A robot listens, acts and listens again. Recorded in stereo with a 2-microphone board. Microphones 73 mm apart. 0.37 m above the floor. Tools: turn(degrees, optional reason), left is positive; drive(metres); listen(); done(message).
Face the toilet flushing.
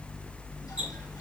listen()
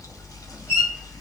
listen()
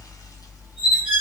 done("I can't make out a toilet flushing to turn to.")